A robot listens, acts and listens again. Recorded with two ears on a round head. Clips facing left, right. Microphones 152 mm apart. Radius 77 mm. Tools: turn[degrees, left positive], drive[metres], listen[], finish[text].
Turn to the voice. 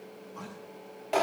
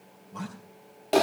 Thought: The man speaking: about 60° right or 120° right.
Action: turn[-60]
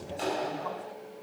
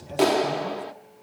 Action: listen[]
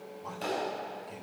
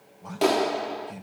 Action: finish[Facing the man speaking.]